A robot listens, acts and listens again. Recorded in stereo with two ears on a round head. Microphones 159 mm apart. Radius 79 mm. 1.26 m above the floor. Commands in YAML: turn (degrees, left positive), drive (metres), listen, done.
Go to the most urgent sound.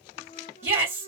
turn: -30
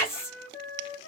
turn: 15
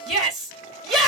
drive: 1.0
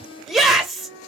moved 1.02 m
drive: 1.0
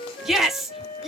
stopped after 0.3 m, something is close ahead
done: "I am next to the shout."